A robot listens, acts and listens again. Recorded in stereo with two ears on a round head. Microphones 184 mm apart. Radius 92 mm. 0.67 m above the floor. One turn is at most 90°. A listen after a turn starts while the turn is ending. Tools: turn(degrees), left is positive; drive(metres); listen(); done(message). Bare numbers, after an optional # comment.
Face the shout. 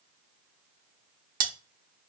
listen()
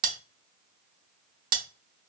listen()
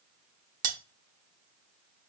done("I can't make out a shout, only cutlery clinking.")